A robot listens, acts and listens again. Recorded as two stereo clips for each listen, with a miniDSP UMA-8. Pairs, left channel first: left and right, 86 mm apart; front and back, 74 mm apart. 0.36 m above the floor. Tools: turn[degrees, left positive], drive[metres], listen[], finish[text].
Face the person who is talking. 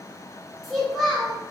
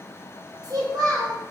Thought: The child speaking: straight behind.
Action: turn[180]
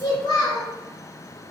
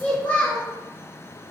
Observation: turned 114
Thought: The child speaking is now 70° left.
Action: turn[70]
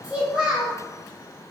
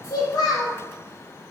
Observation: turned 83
Thought: The child speaking is now 15° right.
Action: turn[-15]
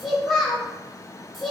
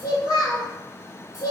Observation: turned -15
Action: finish[Facing the child speaking, 1 to 2 m away.]